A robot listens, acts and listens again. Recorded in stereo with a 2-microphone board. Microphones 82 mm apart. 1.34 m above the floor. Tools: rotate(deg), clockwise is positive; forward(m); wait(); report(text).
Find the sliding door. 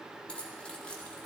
wait()
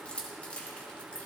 wait()
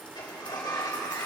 rotate(-65)
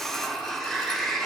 report("Found it: a sliding door, straight ahead.")